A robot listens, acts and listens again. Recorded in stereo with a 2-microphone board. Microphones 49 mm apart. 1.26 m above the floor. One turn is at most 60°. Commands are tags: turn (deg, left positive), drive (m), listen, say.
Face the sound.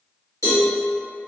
<turn deg="60"/>
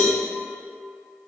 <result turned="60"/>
<listen/>
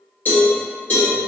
<turn deg="45"/>
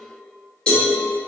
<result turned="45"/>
<turn deg="20"/>
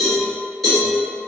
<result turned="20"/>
<say>Facing the cowbell.</say>